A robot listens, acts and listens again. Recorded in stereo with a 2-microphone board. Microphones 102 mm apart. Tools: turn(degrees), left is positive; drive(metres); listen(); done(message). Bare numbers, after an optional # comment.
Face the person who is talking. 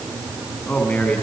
turn(30)
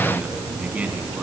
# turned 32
# So it is at 15° right.
turn(-15)
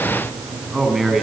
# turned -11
done("Found it: a man speaking, straight ahead, 2 to 4 m away.")